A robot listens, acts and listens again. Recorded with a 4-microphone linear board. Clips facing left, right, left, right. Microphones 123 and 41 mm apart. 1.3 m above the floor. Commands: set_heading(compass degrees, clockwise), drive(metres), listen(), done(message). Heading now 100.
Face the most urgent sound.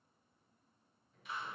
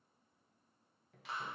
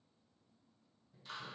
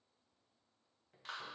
listen()
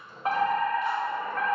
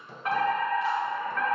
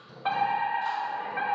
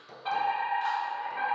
set_heading(75)
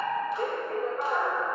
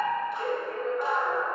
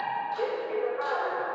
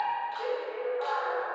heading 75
set_heading(310)
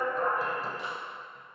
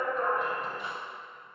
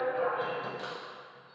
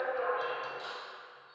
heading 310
done("Found it: a fire alarm, straight ahead.")